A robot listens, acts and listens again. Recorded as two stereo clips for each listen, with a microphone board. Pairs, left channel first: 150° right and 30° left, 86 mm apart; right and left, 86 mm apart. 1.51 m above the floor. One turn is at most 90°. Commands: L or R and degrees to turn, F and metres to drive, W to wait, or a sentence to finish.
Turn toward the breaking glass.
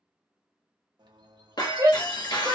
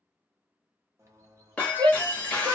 R90
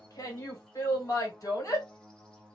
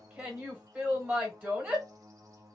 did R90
R70
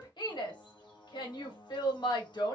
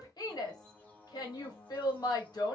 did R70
I heard breaking glass from this way, but can't make it out now.